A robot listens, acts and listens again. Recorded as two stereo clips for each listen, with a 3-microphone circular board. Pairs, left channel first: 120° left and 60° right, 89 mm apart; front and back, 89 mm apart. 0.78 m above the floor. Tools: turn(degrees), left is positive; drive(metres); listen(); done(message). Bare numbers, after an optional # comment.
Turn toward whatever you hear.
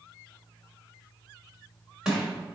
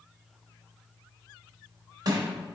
# The crushing: 140° right.
turn(-140)
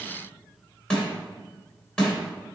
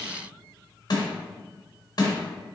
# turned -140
# The crushing is now 40° left.
turn(40)
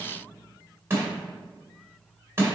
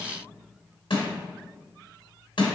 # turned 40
done("Facing the crushing.")